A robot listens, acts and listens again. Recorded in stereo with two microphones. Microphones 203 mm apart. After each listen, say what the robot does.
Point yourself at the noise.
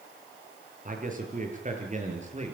Turn 35° right.
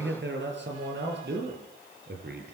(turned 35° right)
Turn 125° right.
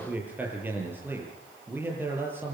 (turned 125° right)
Turn 10° right.
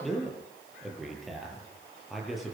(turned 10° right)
Found it: a man speaking, straight ahead, over 4 m away.